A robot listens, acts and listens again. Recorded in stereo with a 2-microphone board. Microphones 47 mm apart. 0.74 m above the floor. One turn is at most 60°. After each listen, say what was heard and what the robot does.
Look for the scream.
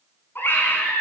The scream: about 45° left or 135° left. Turn 45° left.
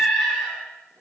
Facing the scream.